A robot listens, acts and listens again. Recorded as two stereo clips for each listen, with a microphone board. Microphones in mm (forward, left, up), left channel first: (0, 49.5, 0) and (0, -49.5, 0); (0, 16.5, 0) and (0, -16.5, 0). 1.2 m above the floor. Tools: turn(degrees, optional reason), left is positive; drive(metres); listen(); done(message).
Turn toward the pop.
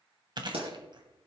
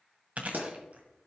turn(degrees=-70, reason="The pop: about 70° right or 110° right.")
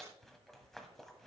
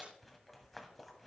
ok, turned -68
listen()
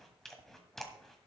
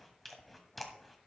done("I heard a pop, but can't make it out now. It was about straight ahead or 45° right.")